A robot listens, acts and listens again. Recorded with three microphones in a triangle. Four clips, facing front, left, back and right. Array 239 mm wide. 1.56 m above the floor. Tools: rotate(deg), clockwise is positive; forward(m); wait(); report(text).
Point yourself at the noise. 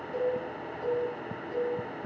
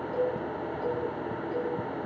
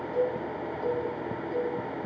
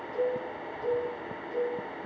rotate(-100)
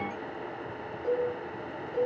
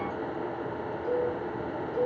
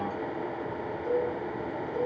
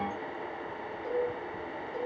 rotate(15)
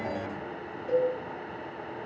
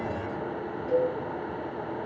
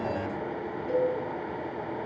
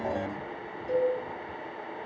report("Found it: a cowbell, straight ahead.")